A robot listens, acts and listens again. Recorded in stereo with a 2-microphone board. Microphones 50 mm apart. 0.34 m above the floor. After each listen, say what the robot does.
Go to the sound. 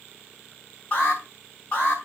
Turn 30° left.
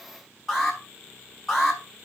Drive 1.0 m forward.
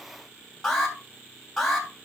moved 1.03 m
Drive 1.0 m forward.
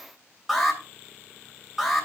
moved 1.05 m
Drive 1.0 m forward.
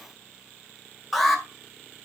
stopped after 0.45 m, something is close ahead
Arrived at the alarm, straight ahead.